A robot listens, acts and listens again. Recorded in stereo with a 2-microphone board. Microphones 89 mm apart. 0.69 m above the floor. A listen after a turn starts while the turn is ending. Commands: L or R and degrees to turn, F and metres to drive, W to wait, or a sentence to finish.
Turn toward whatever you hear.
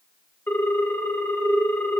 L25
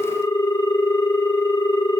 L135
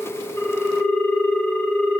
L10
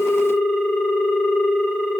Facing the ringtone.